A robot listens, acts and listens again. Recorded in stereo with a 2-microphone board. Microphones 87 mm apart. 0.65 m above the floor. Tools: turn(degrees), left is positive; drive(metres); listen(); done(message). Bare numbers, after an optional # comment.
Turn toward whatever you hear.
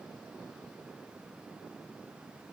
listen()
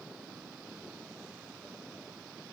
listen()
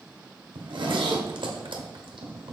turn(-90)
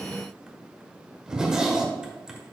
# So it is at 10° right.
turn(-10)
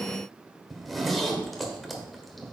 done("Facing the zipper.")